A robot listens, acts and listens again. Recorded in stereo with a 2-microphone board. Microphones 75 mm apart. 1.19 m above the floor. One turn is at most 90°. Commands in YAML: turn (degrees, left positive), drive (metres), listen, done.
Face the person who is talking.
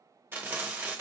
listen: true
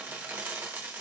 listen: true
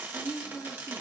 turn: 35
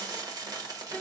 listen: true
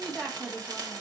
done: "Facing the woman speaking."